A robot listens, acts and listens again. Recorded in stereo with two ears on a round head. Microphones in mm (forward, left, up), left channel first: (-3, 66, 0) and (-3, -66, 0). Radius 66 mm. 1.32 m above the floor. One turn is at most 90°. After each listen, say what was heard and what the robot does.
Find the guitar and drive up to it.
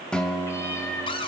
Turn 30° left.
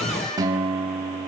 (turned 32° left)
So it is at 25° right. Turn 25° right.
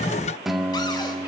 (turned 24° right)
Drive 1.0 m forward.
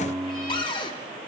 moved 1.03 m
The guitar is now 10° right. Turn 10° right.
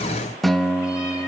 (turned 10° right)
Drive 1.0 m forward.
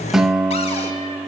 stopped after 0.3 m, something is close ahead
I am next to the guitar.